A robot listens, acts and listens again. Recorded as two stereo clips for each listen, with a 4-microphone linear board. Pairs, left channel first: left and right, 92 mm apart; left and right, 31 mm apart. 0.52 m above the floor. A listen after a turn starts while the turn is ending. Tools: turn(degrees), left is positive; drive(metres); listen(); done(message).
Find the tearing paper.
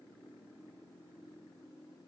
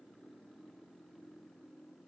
listen()
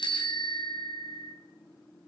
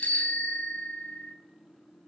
listen()
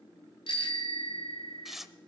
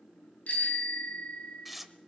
turn(degrees=-30)
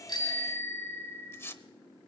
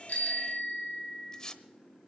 turn(degrees=25)
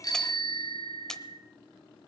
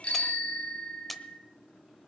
done("Facing the tearing paper, under 1 m away.")